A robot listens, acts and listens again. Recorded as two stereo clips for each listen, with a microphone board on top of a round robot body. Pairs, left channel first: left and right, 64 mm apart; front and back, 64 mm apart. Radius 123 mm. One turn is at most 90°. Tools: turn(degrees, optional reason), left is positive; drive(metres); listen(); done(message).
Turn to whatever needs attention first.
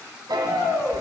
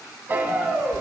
turn(degrees=90, reason="The shout: 115° left.")
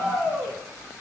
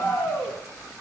turn(degrees=40, reason="The shout is now 40° left.")
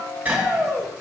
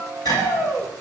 turn(degrees=10, reason="The shout is now 10° left.")
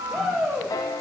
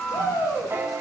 done("Found it: a shout, straight ahead.")